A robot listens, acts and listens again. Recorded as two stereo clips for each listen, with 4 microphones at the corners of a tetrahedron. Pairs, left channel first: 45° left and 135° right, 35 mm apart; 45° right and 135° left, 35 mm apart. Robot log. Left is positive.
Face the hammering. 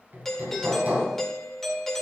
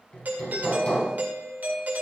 note: The hammering: 100° right.
cmd yaw -100
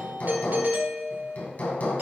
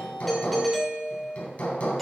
end: Found it: hammering, straight ahead.